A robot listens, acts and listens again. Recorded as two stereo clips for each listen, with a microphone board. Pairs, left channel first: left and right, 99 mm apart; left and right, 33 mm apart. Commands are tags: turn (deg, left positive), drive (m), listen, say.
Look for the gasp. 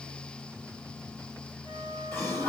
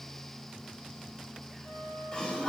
<turn deg="25"/>
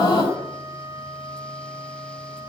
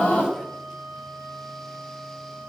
<turn deg="135"/>
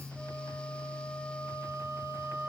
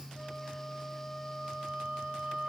<say>I heard a gasp from this way, but can't make it out now.</say>